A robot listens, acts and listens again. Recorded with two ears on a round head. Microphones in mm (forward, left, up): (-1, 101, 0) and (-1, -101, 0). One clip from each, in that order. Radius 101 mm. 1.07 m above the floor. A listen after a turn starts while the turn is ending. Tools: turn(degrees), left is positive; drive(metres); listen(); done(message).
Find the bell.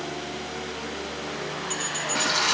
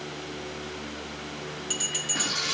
turn(degrees=-20)
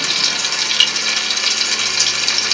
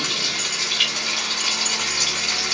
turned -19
listen()
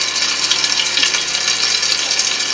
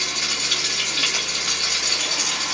listen()
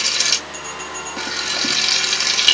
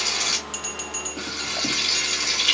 turn(degrees=-140)
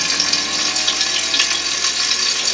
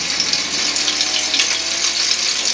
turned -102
turn(degrees=-40)
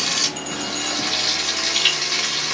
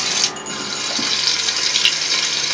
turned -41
listen()
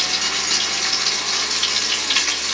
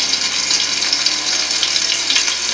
done("I heard a bell from this way, but can't make it out now.")